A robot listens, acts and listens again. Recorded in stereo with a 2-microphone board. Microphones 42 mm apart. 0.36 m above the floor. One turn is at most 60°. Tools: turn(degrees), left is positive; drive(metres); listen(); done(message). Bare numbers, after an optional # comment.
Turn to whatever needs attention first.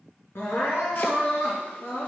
# The crying: about 70° left or 110° left.
turn(60)
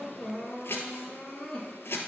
# So it is at 15° left.
turn(15)
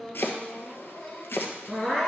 done("Found it: crying, straight ahead.")